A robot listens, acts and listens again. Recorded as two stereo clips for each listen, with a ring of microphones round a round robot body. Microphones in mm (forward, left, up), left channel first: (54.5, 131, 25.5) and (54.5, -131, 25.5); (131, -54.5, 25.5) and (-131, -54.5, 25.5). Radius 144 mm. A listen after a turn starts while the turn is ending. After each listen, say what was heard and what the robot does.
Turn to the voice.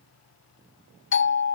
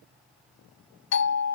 Keep listening.
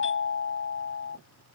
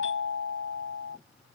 Keep listening.
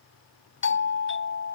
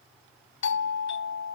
I can't make out anyone speaking to turn to.